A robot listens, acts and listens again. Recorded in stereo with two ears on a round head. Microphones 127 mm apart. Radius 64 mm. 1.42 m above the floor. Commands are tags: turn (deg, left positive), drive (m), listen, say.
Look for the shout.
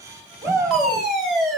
<turn deg="-20"/>
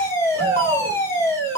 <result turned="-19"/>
<turn deg="-140"/>
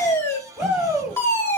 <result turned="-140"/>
<say>Facing the shout.</say>